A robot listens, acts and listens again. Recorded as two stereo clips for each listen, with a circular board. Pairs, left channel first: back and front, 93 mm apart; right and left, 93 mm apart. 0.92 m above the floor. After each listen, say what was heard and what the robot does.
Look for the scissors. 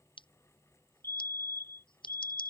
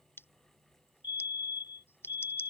The scissors: 155° right. Turn 155° right.
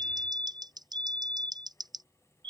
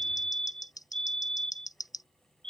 The scissors is now 40° right. Turn 40° right.
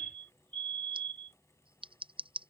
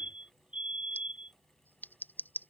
The scissors is now 20° right. Turn 20° right.
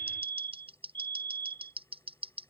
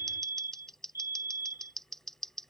Facing the scissors.